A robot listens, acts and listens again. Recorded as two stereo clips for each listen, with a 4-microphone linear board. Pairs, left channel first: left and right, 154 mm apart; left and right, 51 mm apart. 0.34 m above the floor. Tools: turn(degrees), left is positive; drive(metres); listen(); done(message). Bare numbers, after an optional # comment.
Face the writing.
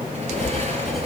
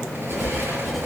turn(30)
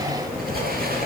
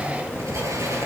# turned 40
# So it is at 40° right.
turn(-40)
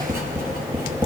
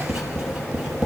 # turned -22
# The writing is now 15° right.
turn(-15)
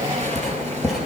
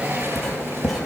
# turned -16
done("Facing the writing.")